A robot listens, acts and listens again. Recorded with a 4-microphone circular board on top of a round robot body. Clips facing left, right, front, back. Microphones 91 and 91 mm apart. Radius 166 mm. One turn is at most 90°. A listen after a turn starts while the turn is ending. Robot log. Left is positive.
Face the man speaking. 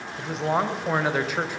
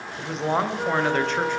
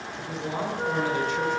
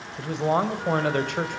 note: The man speaking: 175° left.
cmd yaw +90
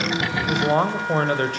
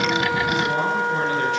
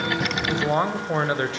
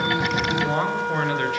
note: The man speaking is now 60° left.
cmd yaw +60
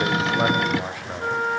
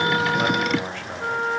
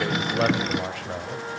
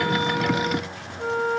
note: The man speaking is now 10° left.
cmd yaw +10
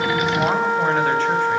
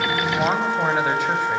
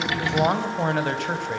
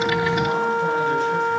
cmd idle
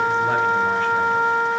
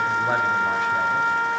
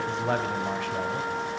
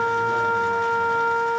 cmd idle
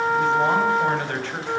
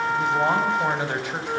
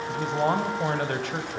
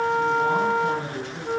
note: The man speaking is now 10° right.
cmd yaw -10
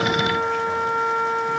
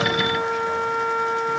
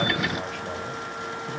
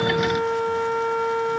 cmd idle
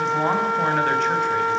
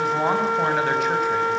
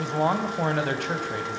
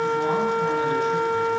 cmd idle
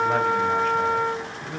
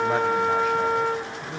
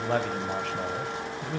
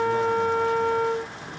end: Found it: a man speaking, straight ahead.